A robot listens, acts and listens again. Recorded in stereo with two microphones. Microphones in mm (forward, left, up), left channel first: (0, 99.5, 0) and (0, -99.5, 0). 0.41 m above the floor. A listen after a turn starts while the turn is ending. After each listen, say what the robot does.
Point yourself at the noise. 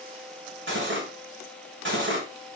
Turn 65° right.
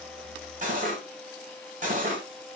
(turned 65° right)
Turn 40° right.
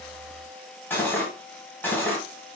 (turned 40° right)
Turn 10° left.
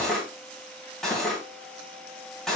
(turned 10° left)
Found it: cutlery clinking, straight ahead.